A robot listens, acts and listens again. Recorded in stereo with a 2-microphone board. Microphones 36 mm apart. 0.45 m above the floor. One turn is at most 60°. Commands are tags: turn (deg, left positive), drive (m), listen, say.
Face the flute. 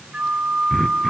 <turn deg="-40"/>
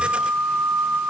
<turn deg="-60"/>
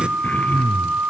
<turn deg="-60"/>
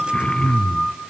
<say>Found it: a flute, straight ahead.</say>